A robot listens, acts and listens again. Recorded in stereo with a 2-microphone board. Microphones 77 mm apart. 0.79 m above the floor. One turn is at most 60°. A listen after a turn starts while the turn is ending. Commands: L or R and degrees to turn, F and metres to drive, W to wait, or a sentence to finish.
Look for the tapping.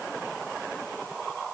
W
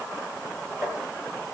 R20
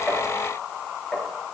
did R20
Facing the tapping.